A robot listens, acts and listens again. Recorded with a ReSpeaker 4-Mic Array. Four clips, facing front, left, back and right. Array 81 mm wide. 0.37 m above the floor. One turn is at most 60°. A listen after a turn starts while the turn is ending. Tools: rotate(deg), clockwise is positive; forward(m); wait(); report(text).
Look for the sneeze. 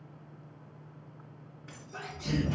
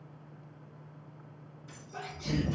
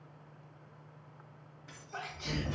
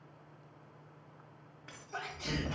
rotate(60)
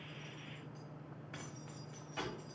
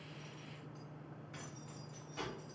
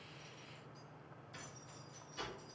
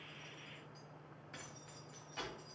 rotate(55)
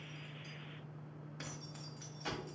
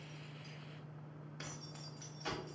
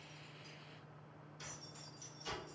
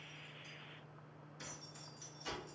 report("Facing where the sneeze came from. I can't hear it now.")